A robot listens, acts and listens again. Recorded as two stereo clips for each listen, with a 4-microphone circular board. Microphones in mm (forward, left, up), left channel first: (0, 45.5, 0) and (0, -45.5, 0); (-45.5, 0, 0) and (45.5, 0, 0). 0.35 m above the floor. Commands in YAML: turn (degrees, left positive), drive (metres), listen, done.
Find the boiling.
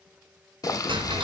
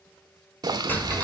turn: 45
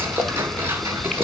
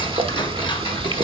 done: "Facing the boiling, under 1 m away."